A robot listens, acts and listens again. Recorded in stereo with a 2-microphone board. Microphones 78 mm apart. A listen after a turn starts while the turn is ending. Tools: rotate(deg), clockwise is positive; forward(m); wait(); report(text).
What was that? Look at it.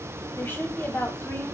rotate(-25)
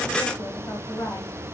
rotate(-125)
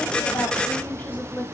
rotate(-30)
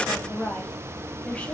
rotate(-20)
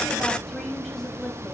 report("Found it: a woman speaking, straight ahead, 1 to 2 m away.")